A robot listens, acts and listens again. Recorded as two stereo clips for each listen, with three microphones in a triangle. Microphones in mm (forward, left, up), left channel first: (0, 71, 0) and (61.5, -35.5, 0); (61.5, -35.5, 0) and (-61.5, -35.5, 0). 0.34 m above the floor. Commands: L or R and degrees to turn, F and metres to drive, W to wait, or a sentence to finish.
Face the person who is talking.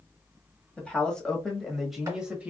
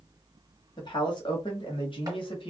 L15
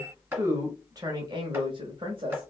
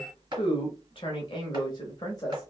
R45
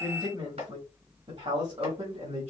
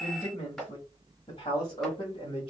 R35
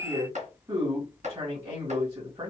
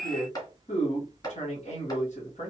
Found it: a man speaking, straight ahead.